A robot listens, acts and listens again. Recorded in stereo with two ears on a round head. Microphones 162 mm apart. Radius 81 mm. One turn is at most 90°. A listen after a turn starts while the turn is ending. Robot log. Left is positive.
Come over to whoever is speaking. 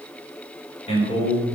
note: The man speaking: about 35° left or 145° left.
cmd yaw +35
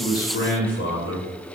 note: So it is at 110° left.
cmd yaw +90
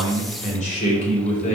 note: The man speaking is now 45° left.
cmd yaw +45
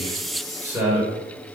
note: The man speaking is now 10° right.
cmd yaw -10
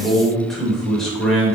cmd fwd 1.0
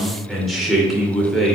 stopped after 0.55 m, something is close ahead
end: Blocked. The man speaking is further on, straight ahead.